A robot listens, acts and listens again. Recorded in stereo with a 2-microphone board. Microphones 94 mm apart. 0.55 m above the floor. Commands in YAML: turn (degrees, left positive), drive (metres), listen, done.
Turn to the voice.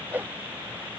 listen: true
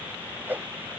listen: true
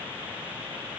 done: "I can't make out anyone speaking, only a whoosh."